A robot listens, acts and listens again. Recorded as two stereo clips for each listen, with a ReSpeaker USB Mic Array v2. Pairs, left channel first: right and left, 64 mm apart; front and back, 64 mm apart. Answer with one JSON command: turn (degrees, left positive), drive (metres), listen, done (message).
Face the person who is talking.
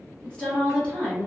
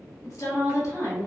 {"turn": -15}
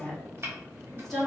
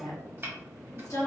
{"done": "Facing the woman speaking, 1 to 2 m away."}